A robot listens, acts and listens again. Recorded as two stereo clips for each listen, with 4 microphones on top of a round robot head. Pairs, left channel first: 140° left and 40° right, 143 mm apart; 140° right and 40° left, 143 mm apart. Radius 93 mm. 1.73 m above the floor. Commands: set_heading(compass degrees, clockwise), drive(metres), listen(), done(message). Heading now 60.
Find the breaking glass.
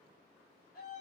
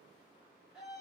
listen()
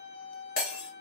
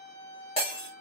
set_heading(255)
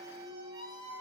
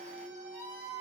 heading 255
done("Facing where the breaking glass came from. I can't hear it now.")